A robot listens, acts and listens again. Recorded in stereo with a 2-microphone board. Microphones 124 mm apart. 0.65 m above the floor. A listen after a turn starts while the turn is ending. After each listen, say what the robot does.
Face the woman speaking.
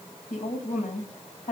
Turn 90° left.
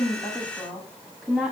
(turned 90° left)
Facing the woman speaking, over 4 m away.